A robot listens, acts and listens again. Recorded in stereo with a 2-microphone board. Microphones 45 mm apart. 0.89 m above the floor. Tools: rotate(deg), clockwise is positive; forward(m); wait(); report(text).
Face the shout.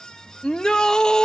rotate(-15)
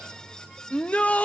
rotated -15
rotate(-150)
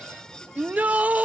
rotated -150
rotate(40)
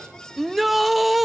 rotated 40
report("Facing the shout.")